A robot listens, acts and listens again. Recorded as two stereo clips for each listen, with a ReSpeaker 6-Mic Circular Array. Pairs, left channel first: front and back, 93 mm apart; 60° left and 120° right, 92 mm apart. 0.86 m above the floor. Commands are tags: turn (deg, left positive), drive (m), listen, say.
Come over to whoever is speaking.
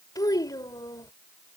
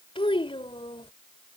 <turn deg="45"/>
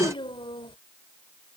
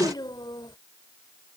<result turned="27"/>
<turn deg="20"/>
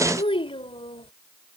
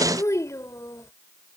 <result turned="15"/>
<drive m="1.0"/>
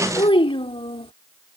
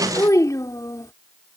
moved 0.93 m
<turn deg="10"/>
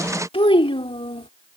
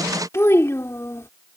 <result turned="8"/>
<drive m="1.0"/>
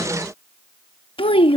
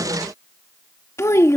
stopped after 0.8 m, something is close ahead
<say>Arrived at the child speaking, straight ahead.</say>